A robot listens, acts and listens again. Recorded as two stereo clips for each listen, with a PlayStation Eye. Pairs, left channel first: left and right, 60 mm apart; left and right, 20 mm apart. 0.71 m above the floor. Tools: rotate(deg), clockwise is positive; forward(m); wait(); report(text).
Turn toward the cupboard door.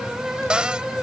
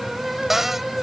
rotate(15)
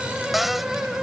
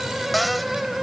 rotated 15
report("Facing the cupboard door.")